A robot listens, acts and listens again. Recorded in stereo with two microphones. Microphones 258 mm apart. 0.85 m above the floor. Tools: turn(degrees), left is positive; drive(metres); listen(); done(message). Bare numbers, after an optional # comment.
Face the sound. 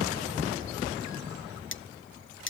# The cutlery clinking: about 50° left or 130° left.
turn(50)
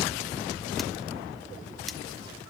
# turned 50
listen()
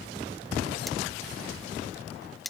done("Found it: cutlery clinking, straight ahead.")